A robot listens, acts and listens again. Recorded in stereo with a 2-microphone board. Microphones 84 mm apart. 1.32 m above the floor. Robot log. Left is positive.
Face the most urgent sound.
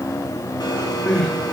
note: The crying: about 15° left or 165° left.
cmd yaw +15
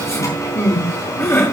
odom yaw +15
note: So it is at 150° left.
cmd yaw +150
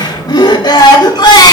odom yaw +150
note: The crying is now 65° left.
cmd yaw +65
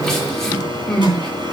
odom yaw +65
note: The crying is now 10° left.
cmd yaw +10
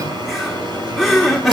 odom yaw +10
end: Found it: crying, straight ahead.